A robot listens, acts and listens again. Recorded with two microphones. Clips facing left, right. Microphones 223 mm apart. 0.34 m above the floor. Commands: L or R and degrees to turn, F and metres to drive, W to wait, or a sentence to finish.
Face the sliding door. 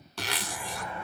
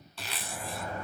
R40
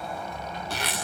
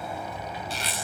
Found it: a sliding door, straight ahead, 1 to 2 m away.